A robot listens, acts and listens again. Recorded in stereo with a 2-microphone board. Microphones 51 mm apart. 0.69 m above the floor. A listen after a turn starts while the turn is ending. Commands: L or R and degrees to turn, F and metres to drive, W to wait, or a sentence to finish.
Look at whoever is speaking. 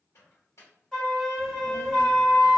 L70
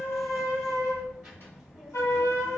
Found it: a child speaking, straight ahead.